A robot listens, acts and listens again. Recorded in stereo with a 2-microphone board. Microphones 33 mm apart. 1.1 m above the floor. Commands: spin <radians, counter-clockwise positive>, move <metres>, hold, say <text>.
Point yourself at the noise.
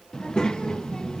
spin 0.44
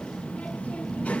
spin 2.36
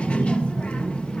spin 0.61
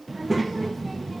say Facing the child speaking.